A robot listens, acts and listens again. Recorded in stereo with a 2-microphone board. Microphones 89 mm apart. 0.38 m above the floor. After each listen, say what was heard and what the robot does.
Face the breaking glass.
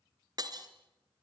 The breaking glass: about 50° right or 130° right. Turn 50° right.
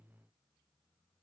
Keep listening.
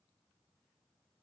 I heard breaking glass, but can't make it out now. It was about straight ahead or 80° right.